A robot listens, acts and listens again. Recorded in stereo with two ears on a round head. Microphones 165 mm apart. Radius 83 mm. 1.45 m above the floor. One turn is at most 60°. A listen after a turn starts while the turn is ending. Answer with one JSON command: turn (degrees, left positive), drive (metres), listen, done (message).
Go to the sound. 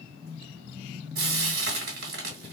{"turn": -55}
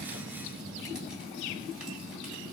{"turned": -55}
{"listen": true}
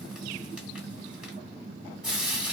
{"drive": 1.0}
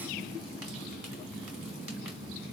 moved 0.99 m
{"listen": true}
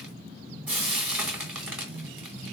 {"turn": -10}
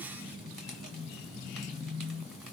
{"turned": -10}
{"listen": true}
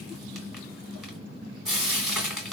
{"drive": 1.0}
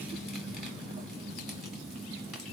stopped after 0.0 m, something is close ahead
{"listen": true}
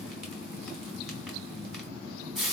{"done": "Arrived at the frying, straight ahead."}